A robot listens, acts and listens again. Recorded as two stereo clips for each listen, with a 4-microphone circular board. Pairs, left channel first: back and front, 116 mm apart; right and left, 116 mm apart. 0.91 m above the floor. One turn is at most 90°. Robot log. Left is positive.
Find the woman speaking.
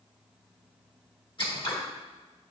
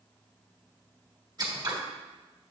cmd idle
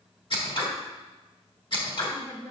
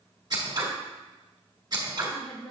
note: The woman speaking: 130° right.
cmd yaw -90
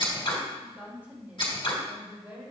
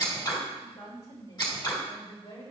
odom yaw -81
note: The woman speaking is now 75° right.
cmd yaw -75
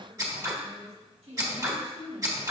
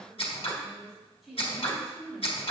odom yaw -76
end: Facing the woman speaking.